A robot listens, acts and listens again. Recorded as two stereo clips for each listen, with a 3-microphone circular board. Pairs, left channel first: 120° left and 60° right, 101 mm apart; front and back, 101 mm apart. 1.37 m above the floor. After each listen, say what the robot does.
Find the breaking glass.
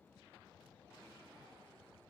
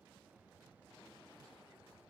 Keep listening.
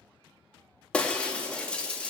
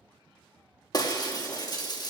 Turn 40° left.
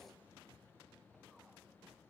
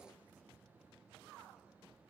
I heard breaking glass from this way, but can't make it out now.